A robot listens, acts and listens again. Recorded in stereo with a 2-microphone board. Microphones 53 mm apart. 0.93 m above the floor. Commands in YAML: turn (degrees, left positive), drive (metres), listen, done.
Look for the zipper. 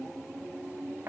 listen: true
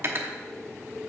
listen: true
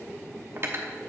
done: "I can't make out a zipper to turn to."